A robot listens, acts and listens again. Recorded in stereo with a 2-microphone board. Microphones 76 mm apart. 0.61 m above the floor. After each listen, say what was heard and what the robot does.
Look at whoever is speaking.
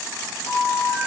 Keep listening.
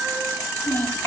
The child speaking: about 25° left or 155° left. Turn 25° left.
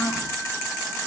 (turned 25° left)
So it is at 130° left. Turn 130° left.
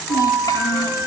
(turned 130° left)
The child speaking is now 55° left. Turn 55° left.
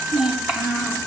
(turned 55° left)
The child speaking is now 10° right. Turn 10° right.
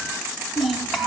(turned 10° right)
Facing the child speaking.